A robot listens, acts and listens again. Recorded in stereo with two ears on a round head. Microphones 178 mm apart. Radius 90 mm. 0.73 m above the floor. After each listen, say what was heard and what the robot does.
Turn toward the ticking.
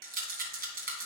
Keep listening.
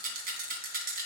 Keep listening.
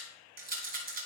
I can't make out ticking, only a rattle.